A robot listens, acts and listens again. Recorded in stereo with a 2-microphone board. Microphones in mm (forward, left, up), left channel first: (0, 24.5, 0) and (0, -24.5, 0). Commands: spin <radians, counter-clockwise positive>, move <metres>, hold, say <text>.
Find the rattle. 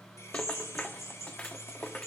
spin 0.35
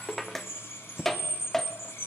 say Facing the rattle, under 1 m away.